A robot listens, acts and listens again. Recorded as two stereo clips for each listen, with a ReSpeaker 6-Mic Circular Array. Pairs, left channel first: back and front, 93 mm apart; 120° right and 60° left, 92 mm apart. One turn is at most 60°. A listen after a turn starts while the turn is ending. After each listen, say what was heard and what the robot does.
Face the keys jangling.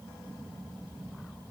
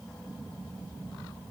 Keep listening.
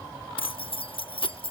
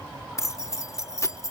The keys jangling: 175° right. Turn 60° right.
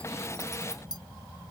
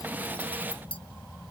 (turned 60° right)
The keys jangling is now 140° right. Turn 60° right.
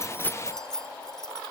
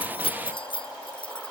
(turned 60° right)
The keys jangling is now 95° right. Turn 60° right.
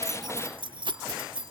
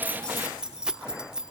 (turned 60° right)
The keys jangling is now 25° right. Turn 25° right.
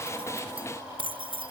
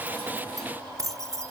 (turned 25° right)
Found it: keys jangling, straight ahead.